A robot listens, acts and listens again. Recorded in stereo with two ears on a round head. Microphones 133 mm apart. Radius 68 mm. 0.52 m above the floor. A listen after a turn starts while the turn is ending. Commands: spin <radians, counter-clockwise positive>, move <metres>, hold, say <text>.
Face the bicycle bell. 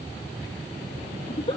hold
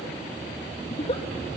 hold
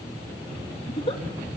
say I can't make out a bicycle bell, only a giggle.